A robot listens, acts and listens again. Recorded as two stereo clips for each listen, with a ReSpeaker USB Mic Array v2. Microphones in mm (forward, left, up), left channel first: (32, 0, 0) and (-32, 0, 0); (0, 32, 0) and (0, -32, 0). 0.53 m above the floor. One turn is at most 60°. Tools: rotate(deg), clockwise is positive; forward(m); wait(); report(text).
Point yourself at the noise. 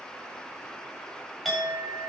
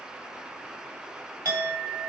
rotate(60)
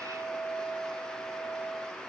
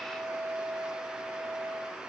rotate(15)
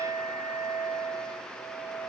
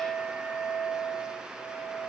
report("Found it: a clink, straight ahead, 2 to 4 m away.")